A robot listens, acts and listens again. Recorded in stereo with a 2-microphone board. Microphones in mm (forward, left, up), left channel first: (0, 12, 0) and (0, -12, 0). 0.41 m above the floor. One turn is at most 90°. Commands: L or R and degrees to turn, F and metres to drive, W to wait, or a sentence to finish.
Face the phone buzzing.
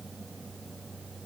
W
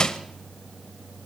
W
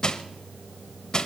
I can't make out a phone buzzing to turn to.